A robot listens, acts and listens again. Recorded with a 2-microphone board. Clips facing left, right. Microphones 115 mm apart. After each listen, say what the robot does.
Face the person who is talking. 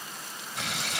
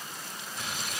Keep listening.
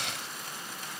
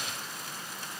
Keep listening.
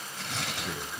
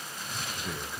Turn 30° left.
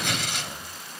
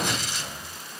Keep listening.
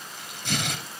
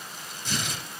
Keep listening.
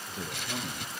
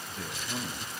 Turn 150° left.
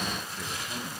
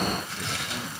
Keep listening.
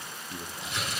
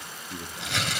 Facing the man speaking.